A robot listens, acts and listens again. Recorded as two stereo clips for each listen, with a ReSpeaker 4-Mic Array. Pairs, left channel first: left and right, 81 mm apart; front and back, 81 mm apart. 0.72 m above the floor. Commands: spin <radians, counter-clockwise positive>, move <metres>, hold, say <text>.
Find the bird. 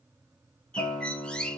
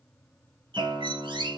spin 2.97
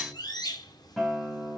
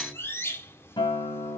spin 0.96
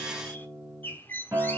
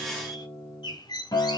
spin 0.44
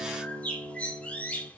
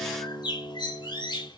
spin 0.26
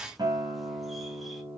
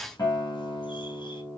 hold
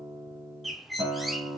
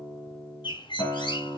say Facing the bird, 1 to 2 m away.